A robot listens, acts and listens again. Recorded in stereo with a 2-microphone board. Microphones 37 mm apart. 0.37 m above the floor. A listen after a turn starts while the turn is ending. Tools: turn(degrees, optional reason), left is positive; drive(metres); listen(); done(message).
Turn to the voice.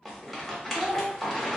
turn(degrees=-20, reason="The child speaking: about 20° right or 160° right.")
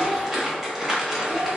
listen()
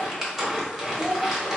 turn(degrees=-135, reason="So it is at 135° right.")
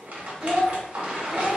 turn(degrees=-15, reason="The child speaking is now 15° right.")
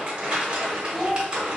done("Facing the child speaking.")